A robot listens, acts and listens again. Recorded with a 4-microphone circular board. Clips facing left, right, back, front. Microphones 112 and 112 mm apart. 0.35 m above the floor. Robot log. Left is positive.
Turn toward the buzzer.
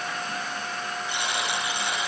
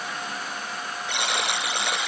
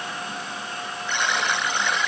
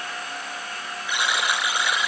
note: The buzzer: 80° right.
cmd yaw -80
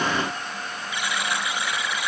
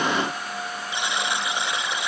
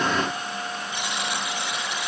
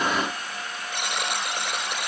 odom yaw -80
note: The buzzer is now 25° right.
cmd yaw -25
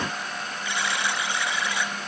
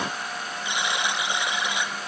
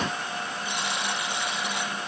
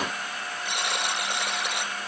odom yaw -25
note: The buzzer is now 20° right.
cmd yaw -20
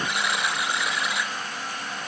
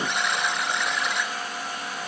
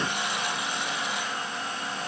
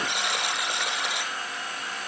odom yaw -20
end: Found it: a buzzer, straight ahead.